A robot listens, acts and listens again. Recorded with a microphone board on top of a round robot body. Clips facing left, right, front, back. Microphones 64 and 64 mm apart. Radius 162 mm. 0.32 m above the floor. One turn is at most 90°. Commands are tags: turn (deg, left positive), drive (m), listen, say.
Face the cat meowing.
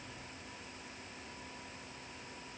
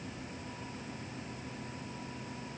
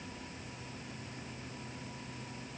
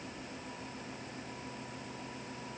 <listen/>
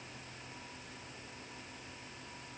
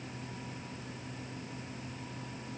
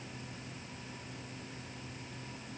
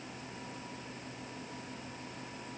<listen/>
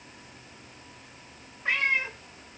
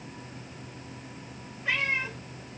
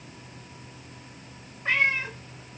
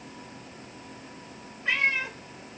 <turn deg="45"/>
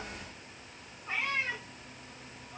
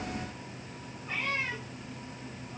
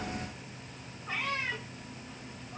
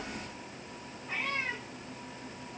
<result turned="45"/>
<turn deg="15"/>
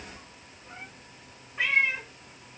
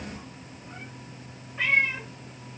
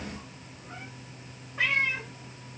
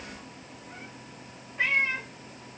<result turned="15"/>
<say>Found it: a cat meowing, straight ahead, 1 to 2 m away.</say>